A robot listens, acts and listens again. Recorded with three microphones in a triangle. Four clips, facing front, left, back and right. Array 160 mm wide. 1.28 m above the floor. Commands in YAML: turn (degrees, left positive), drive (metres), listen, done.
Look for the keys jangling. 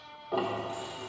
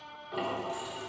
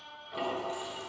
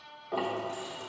turn: -140
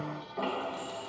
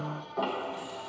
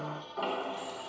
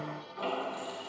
turn: -25
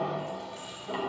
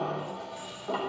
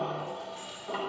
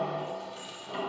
turn: -15
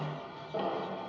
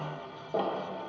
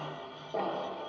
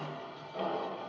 listen: true
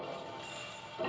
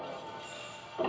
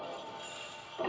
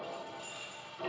done: "Facing the keys jangling, 2 to 4 m away."